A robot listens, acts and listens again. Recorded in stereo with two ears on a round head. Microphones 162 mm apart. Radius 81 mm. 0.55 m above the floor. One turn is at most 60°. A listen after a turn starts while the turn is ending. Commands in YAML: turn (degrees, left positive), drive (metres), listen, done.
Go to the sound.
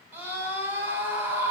turn: -30
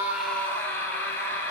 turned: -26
turn: 15
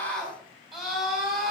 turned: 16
drive: 1.0
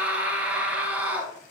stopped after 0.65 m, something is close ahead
turn: -10
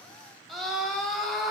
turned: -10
done: "Blocked. The scream is further on, straight ahead."